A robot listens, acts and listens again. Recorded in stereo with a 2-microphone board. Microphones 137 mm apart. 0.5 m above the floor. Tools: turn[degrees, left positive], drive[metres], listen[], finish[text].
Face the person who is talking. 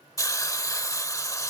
Action: listen[]
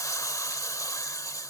Action: listen[]
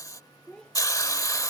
Action: turn[30]
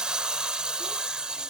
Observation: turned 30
Action: listen[]
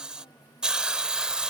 Action: listen[]
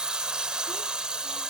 Action: finish[I heard a child speaking, but can't make it out now. It was about 25° right or 145° left.]